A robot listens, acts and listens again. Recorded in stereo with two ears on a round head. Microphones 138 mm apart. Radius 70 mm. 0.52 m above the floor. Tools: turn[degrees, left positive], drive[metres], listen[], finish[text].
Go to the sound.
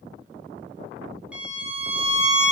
Action: turn[-30]
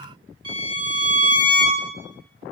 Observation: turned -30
Thought: So it is at 145° right.
Action: turn[-145]
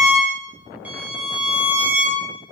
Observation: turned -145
Thought: The violin is now 10° right.
Action: turn[-10]
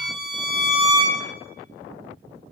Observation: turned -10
Action: drive[1.0]
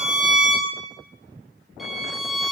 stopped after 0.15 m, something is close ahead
Action: finish[Something is in my way. I am facing the violin but have not reached it.]